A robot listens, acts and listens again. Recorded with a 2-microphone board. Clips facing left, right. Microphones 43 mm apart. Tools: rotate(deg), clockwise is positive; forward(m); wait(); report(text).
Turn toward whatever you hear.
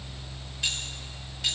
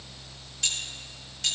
rotate(-30)
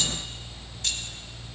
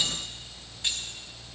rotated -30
rotate(25)
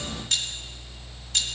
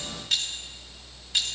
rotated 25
rotate(15)
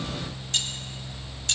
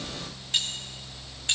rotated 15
rotate(25)
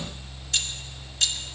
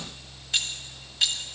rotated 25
rotate(20)
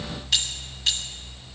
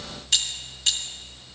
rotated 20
report("Facing the keys jangling, 1 to 2 m away.")